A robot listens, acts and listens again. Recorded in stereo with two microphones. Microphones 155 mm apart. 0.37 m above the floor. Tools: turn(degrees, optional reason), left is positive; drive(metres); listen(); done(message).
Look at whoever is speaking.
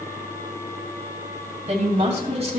turn(degrees=-40, reason="The woman speaking: about 40° right or 140° right.")
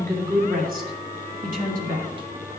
turn(degrees=-115, reason="So it is at 115° right.")
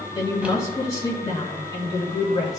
turn(degrees=25, reason="The woman speaking is now 25° left.")
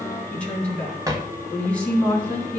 turn(degrees=10, reason="The woman speaking is now 10° left.")
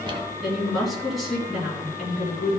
done("Found it: a woman speaking, straight ahead, 2 to 4 m away.")